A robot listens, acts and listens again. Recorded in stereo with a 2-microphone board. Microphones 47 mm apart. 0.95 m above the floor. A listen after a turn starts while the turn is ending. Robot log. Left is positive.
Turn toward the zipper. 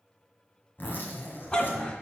note: The zipper: about 50° left or 130° left.
cmd yaw +50
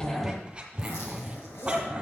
note: So it is at 80° left.
cmd yaw +80
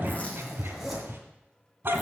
end: Found it: a zipper, straight ahead, 2 to 4 m away.